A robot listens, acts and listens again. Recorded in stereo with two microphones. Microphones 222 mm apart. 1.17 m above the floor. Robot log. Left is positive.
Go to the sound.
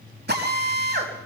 note: The drill: about 50° right or 130° right.
cmd yaw -50
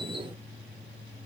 cmd idle
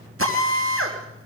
note: So it is at 80° right.
cmd yaw -80
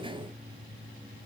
cmd idle
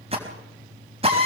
note: The drill is now 25° right.
cmd yaw -25
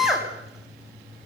cmd fwd 1.0
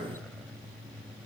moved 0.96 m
cmd idle
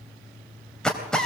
cmd fwd 1.0
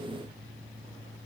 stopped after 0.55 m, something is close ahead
cmd idle
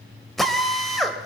end: Something is in my way. I am facing the drill but have not reached it.